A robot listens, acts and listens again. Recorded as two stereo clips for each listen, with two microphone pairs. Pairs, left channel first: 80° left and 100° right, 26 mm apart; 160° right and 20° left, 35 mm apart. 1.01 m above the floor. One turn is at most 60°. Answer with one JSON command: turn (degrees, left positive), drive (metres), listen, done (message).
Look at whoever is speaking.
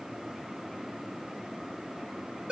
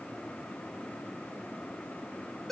{"listen": true}
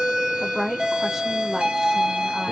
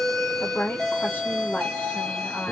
{"turn": -60}
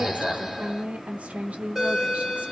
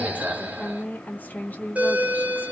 {"turn": -60}
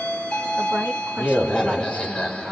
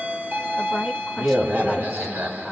{"turn": -60}
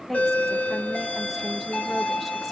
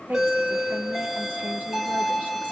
{"turn": -10}
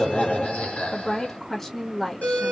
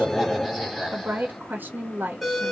{"done": "Found it: a woman speaking, straight ahead."}